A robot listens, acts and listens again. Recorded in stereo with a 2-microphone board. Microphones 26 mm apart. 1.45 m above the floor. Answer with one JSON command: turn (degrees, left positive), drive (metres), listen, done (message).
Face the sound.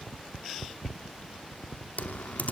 {"turn": 90}
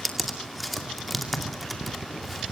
{"done": "Facing the typing on a keyboard, 2 to 4 m away."}